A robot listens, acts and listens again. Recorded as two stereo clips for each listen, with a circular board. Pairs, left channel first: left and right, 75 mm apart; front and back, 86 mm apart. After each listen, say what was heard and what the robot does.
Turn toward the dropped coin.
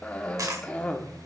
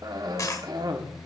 The dropped coin: 50° right. Turn 50° right.
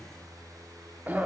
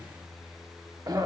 I heard a dropped coin from this way, but can't make it out now.